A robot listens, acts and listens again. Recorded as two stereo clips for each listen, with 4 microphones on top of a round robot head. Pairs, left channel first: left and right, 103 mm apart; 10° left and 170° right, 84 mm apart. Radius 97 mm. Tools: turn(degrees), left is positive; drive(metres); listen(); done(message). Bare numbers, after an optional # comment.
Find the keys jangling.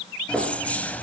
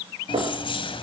# The keys jangling: 15° left.
turn(15)
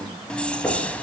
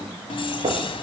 # The keys jangling is now 15° left.
turn(15)
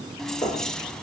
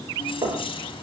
done("Found it: keys jangling, straight ahead, 2 to 4 m away.")